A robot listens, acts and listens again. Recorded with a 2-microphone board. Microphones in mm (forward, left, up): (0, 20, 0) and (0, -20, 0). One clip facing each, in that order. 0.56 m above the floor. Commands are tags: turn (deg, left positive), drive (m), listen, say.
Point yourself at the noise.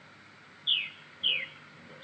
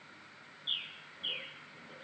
<turn deg="60"/>
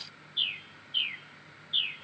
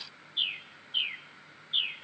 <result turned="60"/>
<say>Facing the bird.</say>